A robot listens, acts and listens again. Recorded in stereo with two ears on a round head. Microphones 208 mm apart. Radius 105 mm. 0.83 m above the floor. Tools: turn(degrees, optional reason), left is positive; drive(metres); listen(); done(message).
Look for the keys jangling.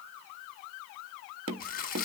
listen()
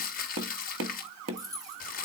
turn(degrees=-15, reason="The keys jangling: about 15° right or 165° right.")
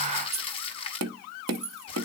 turn(degrees=-30, reason="The keys jangling: about 30° right or 150° right.")
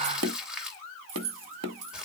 turn(degrees=-120, reason="So it is at 120° right.")
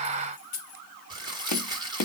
turn(degrees=35, reason="The keys jangling is now 35° left.")
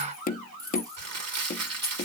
turn(degrees=-15, reason="The keys jangling is now 15° right.")
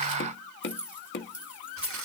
done("Found it: keys jangling, straight ahead.")